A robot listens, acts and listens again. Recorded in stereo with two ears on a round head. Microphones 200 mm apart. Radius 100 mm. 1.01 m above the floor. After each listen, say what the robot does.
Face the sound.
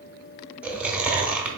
Turn 30° right.
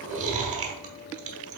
Turn 140° right.
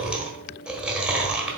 Facing the chewing.